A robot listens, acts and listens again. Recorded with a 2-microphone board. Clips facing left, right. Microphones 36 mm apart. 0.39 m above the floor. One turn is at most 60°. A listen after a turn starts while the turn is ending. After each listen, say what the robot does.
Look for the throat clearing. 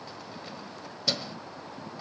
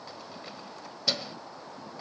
Keep listening.
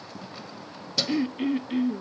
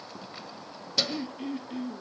Turn 45° left.
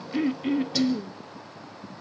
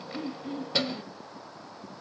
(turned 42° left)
Turn 60° left.
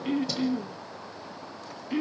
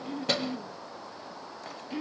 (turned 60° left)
Turn 30° left.
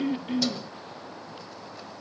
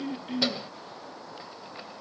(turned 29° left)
Keep listening.
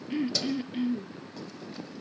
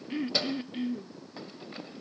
Found it: throat clearing, straight ahead.